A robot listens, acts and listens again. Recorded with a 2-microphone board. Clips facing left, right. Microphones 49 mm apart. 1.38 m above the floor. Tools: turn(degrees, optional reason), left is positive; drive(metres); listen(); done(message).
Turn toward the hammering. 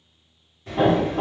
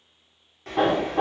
turn(degrees=-65, reason="The hammering: about 65° right or 115° right.")
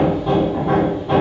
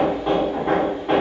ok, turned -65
turn(degrees=-45, reason="So it is at 45° right.")
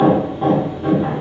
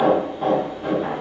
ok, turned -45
turn(degrees=10, reason="The hammering is now 10° left.")
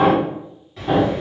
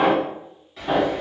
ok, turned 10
done("Found it: hammering, straight ahead.")